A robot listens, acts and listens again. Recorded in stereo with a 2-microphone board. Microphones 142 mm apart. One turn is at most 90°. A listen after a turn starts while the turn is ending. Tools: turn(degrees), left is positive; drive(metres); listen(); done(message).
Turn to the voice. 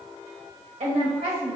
turn(degrees=-70)
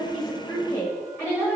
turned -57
turn(degrees=-10)
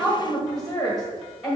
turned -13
done("Found it: a woman speaking, straight ahead.")